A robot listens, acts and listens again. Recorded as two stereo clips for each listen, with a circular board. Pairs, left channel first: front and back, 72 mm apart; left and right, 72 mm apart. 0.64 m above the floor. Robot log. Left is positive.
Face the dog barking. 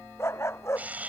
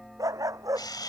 note: The dog barking: 50° right.
cmd yaw -50
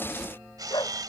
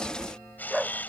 end: Facing the dog barking.